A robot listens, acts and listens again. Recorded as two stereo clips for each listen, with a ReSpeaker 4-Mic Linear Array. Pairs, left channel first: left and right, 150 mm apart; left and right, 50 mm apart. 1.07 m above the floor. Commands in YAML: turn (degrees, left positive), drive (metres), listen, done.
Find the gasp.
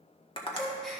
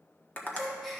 turn: 30
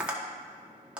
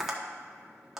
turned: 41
listen: true
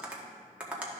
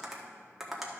done: "I heard a gasp, but can't make it out now. It was about 40° right or 140° left."